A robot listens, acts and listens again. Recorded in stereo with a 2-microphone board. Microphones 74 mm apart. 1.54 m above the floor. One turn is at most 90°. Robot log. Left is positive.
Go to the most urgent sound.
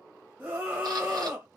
note: The scream: about 25° right or 155° right.
cmd yaw -25
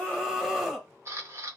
cmd fwd 1.0
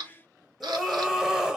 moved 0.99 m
note: The scream is now 10° right.
cmd yaw -10
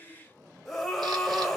cmd fwd 1.0
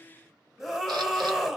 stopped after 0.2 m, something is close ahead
end: I am next to the scream.